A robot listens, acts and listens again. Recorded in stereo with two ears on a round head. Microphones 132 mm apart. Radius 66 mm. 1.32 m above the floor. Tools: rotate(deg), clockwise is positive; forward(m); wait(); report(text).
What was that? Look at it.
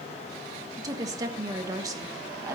rotate(25)
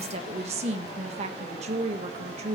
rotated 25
rotate(130)
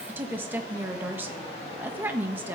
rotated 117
rotate(15)
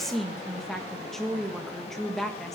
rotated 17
report("Found it: a woman speaking, straight ahead, 1 to 2 m away.")